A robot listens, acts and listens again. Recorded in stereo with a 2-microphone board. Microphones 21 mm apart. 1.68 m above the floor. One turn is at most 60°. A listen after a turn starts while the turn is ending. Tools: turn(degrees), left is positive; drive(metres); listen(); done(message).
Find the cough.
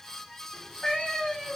listen()
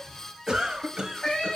turn(degrees=-40)
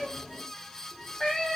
listen()
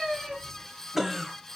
done("Facing the cough, 1 to 2 m away.")